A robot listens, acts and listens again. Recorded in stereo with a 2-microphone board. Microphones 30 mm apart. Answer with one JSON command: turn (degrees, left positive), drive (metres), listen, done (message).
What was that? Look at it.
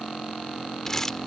{"turn": 15}
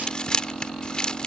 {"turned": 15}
{"turn": 150}
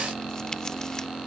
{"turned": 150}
{"listen": true}
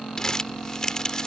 {"turn": 25}
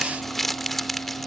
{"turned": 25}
{"turn": 10}
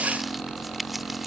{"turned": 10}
{"done": "Facing the crumpling."}